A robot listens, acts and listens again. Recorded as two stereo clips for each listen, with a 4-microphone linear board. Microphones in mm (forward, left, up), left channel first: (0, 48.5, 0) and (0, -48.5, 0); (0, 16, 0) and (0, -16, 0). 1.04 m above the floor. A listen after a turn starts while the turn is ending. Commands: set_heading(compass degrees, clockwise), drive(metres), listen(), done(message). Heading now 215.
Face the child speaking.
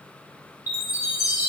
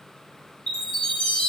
listen()
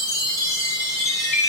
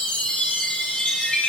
listen()
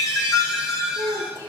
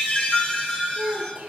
set_heading(250)
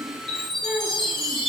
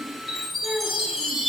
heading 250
done("Facing the child speaking, over 4 m away.")